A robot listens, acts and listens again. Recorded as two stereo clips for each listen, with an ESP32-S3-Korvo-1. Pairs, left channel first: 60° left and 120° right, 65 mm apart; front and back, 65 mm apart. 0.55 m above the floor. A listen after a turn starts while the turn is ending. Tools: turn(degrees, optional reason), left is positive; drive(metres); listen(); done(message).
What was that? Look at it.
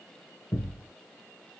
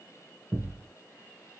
turn(degrees=115, reason="The thud: 115° left.")
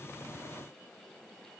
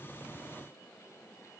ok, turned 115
done("I heard a thud from this way, but can't make it out now.")